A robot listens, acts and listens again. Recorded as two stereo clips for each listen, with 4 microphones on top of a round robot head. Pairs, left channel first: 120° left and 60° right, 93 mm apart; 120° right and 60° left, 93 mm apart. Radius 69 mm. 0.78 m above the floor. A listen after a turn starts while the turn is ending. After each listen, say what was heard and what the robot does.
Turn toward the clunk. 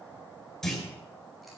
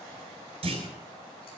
The clunk: 40° left. Turn 40° left.
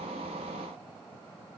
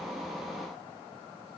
I heard a clunk from this way, but can't make it out now.